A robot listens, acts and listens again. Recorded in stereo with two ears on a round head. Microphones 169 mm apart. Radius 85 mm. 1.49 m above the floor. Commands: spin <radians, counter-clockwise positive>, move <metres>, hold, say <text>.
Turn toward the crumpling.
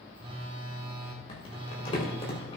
spin 0.52
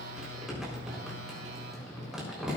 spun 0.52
say Facing the crumpling, over 4 m away.